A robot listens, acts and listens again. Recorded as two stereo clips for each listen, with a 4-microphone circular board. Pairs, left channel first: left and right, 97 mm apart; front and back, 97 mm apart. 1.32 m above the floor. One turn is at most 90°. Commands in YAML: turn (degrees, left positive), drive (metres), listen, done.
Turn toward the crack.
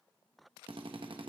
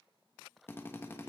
listen: true
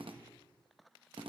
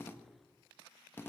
listen: true
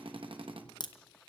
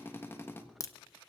turn: 55
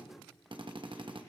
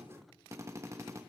done: "I heard a crack from this way, but can't make it out now."